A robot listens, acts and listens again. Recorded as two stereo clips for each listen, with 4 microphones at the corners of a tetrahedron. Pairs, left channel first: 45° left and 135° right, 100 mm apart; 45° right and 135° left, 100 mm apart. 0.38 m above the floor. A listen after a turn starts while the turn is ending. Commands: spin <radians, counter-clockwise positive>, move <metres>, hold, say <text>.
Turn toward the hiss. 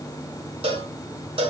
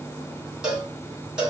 hold
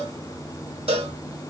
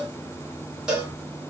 hold
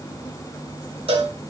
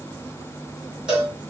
say I can't make out a hiss to turn to.